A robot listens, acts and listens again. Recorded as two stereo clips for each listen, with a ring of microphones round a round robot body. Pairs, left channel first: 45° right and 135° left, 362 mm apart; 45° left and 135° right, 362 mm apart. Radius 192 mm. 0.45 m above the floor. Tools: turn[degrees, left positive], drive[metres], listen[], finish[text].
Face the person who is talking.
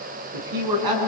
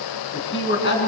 Thought: The man speaking: 105° left.
Action: turn[105]
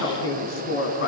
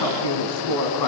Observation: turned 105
Thought: The man speaking is now 15° left.
Action: turn[15]
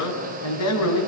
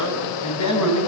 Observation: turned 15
Action: finish[Facing the man speaking.]